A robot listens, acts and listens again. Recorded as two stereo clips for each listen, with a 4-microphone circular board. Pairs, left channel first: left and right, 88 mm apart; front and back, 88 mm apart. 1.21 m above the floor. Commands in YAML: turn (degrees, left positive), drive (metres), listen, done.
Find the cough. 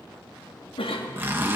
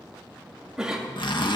turn: 95
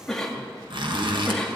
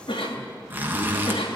turn: 10
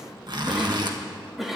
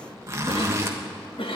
done: "Facing the cough."